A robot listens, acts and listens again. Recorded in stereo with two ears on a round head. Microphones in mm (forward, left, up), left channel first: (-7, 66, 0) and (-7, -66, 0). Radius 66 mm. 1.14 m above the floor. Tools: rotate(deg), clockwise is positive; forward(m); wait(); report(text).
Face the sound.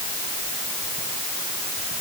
wait()
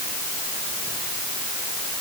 wait()
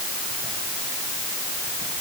report("I can't make out anything.")